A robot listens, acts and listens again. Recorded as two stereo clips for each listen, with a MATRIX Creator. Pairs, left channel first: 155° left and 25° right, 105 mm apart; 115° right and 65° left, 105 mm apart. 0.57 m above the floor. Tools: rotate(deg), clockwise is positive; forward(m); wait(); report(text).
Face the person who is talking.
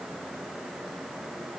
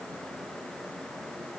wait()
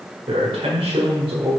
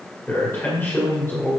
rotate(45)
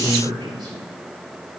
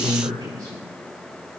rotate(-15)
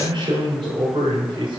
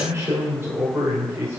report("Found it: a man speaking, straight ahead.")